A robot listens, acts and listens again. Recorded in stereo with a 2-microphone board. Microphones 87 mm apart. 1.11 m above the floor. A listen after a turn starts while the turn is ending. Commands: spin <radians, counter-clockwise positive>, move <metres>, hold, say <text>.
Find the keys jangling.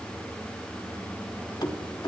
spin 1.05
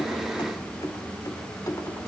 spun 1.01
spin 0.70
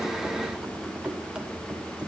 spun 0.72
spin -0.26
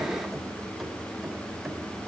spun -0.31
hold
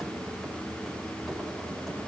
hold
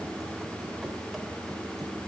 say I heard keys jangling from this way, but can't make it out now.